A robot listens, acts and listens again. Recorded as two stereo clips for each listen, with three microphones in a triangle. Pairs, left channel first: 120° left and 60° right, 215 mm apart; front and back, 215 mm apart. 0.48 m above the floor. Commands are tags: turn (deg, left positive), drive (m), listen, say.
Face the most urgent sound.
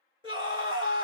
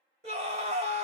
<turn deg="-120"/>
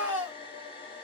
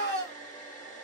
<turn deg="20"/>
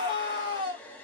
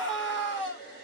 <say>Found it: a scream, straight ahead.</say>